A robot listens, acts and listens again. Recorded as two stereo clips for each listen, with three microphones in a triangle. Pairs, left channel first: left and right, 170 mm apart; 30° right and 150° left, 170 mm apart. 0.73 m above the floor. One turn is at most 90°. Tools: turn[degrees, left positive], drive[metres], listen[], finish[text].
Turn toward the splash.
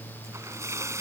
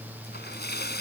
Thought: The splash: 15° right.
Action: turn[-15]
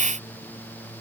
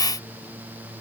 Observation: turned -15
Action: finish[Facing where the splash came from. I can't hear it now.]